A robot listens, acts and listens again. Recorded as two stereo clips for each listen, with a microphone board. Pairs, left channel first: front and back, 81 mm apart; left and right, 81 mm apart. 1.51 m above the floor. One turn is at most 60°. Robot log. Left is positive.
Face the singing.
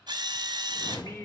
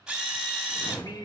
note: The singing: 55° left.
cmd yaw +55
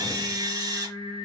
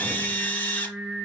note: The singing is now 10° right.
cmd yaw -10
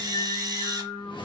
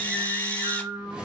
note: The singing is now 25° right.
cmd yaw -25
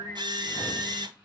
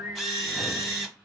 end: Found it: singing, straight ahead, 1 to 2 m away.